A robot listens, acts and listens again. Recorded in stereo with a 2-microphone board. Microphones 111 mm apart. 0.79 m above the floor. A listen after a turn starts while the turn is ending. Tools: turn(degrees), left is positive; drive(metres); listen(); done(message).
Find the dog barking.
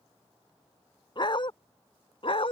turn(degrees=55)
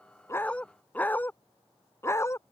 turn(degrees=25)
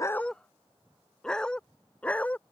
turn(degrees=15)
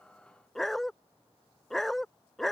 done("Found it: a dog barking, straight ahead.")